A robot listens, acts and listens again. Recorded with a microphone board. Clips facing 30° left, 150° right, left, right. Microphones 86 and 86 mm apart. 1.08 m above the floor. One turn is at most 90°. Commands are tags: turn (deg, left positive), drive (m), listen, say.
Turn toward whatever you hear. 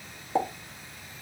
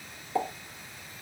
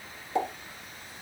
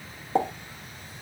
<turn deg="-35"/>
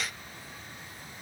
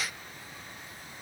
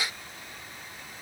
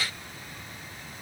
<say>Facing where the pop came from. I can't hear it now.</say>